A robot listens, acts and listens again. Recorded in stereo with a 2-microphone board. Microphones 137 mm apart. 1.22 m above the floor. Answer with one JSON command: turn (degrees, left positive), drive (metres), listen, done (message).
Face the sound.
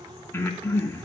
{"turn": 20}
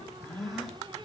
{"done": "Found it: breathing, straight ahead."}